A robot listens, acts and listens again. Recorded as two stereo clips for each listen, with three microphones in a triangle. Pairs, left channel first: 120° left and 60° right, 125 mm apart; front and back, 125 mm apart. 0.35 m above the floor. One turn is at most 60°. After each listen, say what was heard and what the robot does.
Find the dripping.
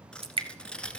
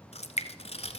The dripping: 20° right. Turn 20° right.
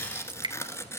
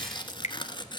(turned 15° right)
The dripping is now 10° right. Turn 10° right.
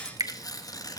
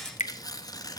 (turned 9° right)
Found it: dripping, straight ahead, 1 to 2 m away.